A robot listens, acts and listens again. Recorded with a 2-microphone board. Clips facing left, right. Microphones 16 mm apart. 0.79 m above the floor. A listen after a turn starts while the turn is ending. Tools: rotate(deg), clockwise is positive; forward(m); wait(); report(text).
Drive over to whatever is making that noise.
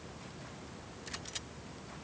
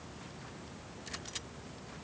wait()
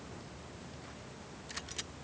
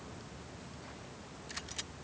wait()
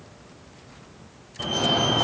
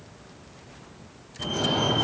rotate(-35)
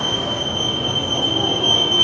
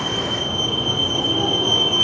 rotate(-10)
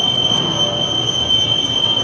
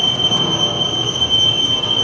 forward(1.0)
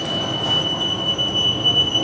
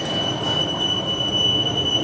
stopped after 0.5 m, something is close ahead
report("Something is in my way. I am facing the fire alarm but have not reached it.")